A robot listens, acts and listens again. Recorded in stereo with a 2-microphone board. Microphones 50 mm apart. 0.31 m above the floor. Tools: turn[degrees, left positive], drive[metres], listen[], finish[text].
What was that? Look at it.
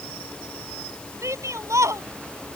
Action: turn[-90]
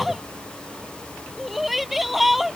Action: finish[Found it: a shout, straight ahead.]